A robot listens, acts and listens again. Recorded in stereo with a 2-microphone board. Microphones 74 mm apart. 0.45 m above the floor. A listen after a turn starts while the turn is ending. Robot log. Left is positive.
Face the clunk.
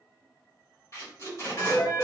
cmd idle
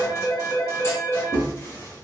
note: The clunk: about 35° left or 145° left.
cmd yaw +35
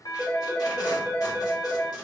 cmd idle
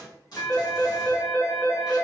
end: I heard a clunk, but can't make it out now. It was about straight ahead or 110° left.